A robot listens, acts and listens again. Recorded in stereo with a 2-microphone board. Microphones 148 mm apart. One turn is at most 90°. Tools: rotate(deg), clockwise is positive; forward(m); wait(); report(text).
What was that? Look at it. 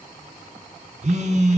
rotate(55)
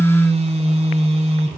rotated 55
rotate(55)
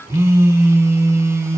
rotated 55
rotate(20)
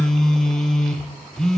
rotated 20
report("Found it: a phone buzzing, straight ahead.")